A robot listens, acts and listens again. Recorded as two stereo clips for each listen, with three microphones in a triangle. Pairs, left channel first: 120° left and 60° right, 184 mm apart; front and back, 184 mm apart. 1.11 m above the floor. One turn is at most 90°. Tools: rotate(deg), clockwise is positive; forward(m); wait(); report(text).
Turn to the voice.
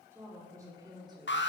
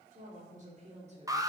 rotate(90)
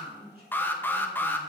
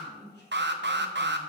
rotate(25)
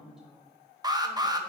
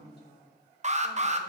rotate(-30)
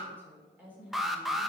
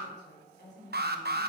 rotate(-25)
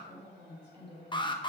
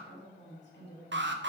report("Facing the woman speaking, 2 to 4 m away.")